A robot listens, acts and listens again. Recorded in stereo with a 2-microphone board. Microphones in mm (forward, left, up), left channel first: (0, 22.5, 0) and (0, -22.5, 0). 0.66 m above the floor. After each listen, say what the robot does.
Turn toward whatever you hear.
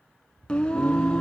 Turn 15° left.
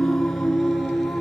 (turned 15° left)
Turn 30° left.
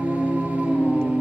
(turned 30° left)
Turn 35° right.
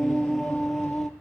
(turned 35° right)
Facing the singing, 2 to 4 m away.